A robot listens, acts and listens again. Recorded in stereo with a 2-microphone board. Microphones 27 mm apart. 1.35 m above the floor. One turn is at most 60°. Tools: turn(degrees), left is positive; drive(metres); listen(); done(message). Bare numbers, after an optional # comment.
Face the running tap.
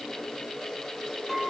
listen()
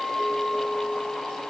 listen()
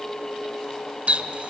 # The running tap: about 50° right or 130° right.
turn(-50)
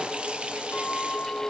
listen()
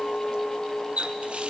# So it is at 60° right.
turn(-60)
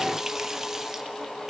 # The running tap is now 20° right.
turn(-20)
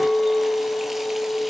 listen()
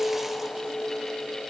listen()
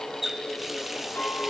# The running tap is now 10° right.
turn(-10)
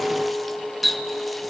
done("Facing the running tap, under 1 m away.")